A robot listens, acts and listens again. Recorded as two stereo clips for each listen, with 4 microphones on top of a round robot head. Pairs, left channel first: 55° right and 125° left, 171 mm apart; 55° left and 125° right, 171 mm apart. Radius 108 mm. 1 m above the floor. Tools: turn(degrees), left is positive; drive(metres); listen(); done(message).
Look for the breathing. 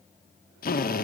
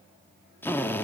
listen()
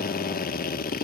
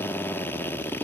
listen()
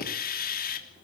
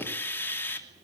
done("I can't make out breathing, only a drill.")